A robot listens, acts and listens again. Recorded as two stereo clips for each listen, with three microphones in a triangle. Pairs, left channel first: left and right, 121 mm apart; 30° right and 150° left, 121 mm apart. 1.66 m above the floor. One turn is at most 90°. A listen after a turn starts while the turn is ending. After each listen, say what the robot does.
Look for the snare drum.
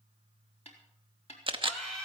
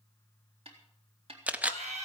Turn 90° left.
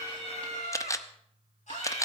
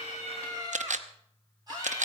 Turn 25° left.
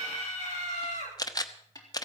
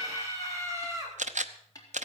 Turn 30° left.
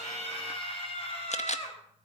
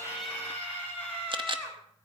Keep listening.
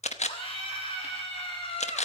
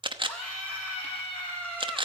Keep listening.
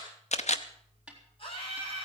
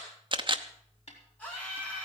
Found it: a snare drum, straight ahead.